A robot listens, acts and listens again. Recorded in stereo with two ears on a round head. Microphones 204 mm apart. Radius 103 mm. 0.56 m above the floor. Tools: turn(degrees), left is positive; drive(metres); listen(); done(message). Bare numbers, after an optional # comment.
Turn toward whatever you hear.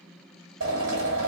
# The drill: about 55° right or 125° right.
turn(-55)
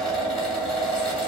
done("Found it: a drill, straight ahead, 2 to 4 m away.")